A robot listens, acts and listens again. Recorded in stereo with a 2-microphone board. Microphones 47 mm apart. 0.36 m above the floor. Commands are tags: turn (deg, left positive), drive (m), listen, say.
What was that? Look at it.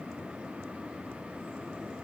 <listen/>
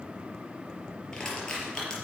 <turn deg="15"/>
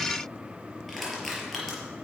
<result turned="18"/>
<say>Found it: crushing, straight ahead, over 4 m away.</say>